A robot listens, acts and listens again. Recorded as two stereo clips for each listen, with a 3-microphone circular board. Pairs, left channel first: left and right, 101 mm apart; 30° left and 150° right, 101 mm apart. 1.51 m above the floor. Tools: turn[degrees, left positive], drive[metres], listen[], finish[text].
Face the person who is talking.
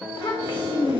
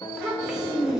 Thought: The child speaking: 125° left.
Action: turn[125]
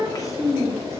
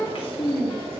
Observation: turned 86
Thought: The child speaking is now 40° left.
Action: turn[40]
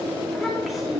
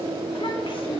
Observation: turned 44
Action: finish[Found it: a child speaking, straight ahead.]